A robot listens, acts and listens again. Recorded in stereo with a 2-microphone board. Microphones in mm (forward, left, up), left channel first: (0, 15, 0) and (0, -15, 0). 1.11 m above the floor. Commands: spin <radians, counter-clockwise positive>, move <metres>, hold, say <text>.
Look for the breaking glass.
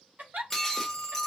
spin 0.52
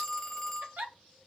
hold
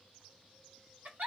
say I heard breaking glass, but can't make it out now. It was about 20° right or 140° left.